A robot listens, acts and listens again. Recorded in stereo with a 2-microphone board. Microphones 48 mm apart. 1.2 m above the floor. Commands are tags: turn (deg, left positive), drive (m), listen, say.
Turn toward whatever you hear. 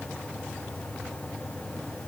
<listen/>
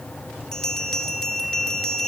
<turn deg="30"/>
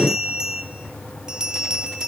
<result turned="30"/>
<turn deg="-15"/>
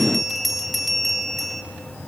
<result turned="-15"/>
<say>Facing the bell.</say>